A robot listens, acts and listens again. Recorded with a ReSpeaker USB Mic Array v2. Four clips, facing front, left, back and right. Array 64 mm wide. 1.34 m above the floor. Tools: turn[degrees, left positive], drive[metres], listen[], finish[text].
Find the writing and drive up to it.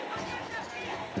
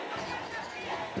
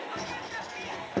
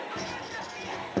Thought: The writing: 145° right.
Action: turn[-145]
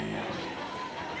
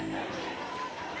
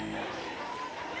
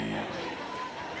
Action: drive[1.0]
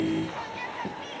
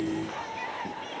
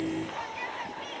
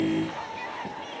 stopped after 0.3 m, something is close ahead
Action: finish[Something is in my way. I am facing the writing but have not reached it.]